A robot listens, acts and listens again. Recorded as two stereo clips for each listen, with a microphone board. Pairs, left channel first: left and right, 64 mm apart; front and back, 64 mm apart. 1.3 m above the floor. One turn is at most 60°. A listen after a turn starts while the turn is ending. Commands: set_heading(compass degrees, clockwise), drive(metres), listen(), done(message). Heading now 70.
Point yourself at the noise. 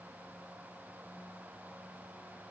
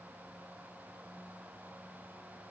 listen()
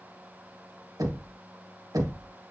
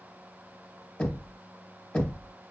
set_heading(130)
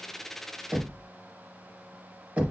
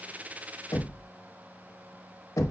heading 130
set_heading(150)
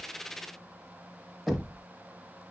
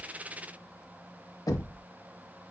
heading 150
done("Found it: knocking, straight ahead.")